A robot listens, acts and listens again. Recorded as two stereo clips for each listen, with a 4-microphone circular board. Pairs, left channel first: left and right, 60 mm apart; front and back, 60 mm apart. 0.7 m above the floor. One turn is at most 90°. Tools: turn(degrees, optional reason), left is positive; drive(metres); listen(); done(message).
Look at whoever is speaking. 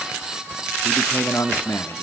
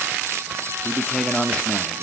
turn(degrees=70, reason="The man speaking: 70° left.")
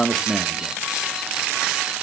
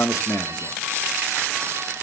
done("Found it: a man speaking, straight ahead, 1 to 2 m away.")